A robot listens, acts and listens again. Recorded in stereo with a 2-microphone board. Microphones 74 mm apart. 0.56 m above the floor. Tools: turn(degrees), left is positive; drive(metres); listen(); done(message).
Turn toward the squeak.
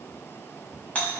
listen()
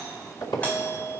turn(degrees=65)
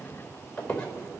turn(degrees=20)
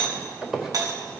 done("Found it: a squeak, straight ahead.")